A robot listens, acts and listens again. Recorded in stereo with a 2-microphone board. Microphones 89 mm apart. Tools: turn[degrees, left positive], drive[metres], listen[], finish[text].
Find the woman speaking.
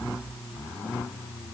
Action: listen[]
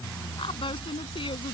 Thought: The woman speaking: about 75° left or 105° left.
Action: turn[75]
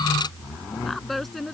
Action: finish[Facing the woman speaking.]